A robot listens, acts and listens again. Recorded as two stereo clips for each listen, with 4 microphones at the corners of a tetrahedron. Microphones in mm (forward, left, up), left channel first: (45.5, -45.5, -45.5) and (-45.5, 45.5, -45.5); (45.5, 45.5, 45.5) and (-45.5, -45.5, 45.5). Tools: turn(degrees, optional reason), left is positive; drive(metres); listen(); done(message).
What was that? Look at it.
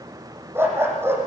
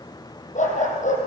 turn(degrees=65, reason="The dog barking: 65° left.")
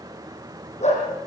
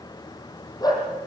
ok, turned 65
turn(degrees=-15, reason="The dog barking is now 15° right.")
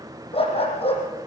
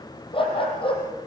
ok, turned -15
done("Facing the dog barking.")